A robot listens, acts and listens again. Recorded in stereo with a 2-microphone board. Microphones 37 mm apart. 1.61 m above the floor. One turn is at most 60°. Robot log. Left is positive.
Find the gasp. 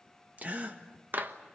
note: The gasp: about 40° right or 140° right.
cmd yaw -40
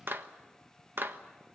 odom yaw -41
cmd idle
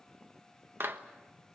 end: I heard a gasp, but can't make it out now. It was about straight ahead or 100° right.